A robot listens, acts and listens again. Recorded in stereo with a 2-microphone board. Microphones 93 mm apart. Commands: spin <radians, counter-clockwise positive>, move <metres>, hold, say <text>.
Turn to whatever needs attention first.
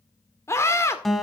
spin 0.44
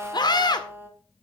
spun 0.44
spin 2.18
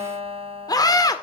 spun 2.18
spin 0.87
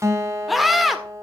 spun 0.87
say Facing the scream.